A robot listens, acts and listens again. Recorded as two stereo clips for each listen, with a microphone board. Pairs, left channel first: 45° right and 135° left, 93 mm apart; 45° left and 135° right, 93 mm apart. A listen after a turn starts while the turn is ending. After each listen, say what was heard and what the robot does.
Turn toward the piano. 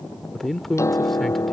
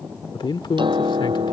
The piano: 105° right. Turn 105° right.
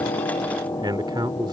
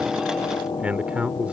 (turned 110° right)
Facing the piano.